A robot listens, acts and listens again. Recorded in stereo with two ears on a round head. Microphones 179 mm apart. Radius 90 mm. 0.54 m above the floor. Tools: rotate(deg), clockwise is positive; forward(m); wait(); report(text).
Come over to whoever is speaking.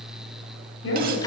rotate(-65)
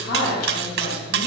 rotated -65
rotate(-45)
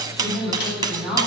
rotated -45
forward(1.0)
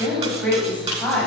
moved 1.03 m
rotate(-10)
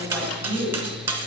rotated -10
forward(1.0)
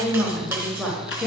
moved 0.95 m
forward(1.0)
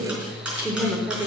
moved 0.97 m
forward(1.0)
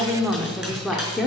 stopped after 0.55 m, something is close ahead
report("Arrived at the woman speaking, straight ahead.")